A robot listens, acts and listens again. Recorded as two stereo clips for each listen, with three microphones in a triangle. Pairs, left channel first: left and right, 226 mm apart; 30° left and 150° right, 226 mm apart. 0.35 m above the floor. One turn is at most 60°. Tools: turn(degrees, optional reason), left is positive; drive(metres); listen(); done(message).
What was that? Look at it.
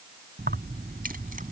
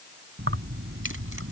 turn(degrees=-60, reason="The keys jangling: 140° right.")
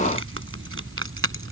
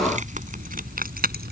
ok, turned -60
turn(degrees=-60, reason="The keys jangling is now 105° right.")
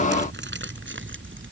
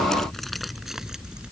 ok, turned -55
turn(degrees=-60, reason="The keys jangling is now 65° right.")
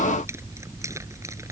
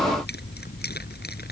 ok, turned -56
turn(degrees=-15, reason="The keys jangling is now 15° right.")
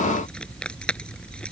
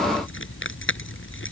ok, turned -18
done("Found it: keys jangling, straight ahead.")